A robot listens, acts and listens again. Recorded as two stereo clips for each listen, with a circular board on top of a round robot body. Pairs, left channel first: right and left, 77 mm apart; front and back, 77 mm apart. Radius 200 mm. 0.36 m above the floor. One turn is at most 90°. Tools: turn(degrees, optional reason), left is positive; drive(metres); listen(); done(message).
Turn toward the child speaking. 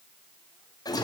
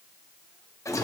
listen()
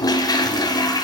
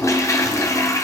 listen()
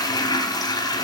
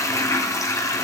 done("I can't make out a child speaking, only a toilet flushing.")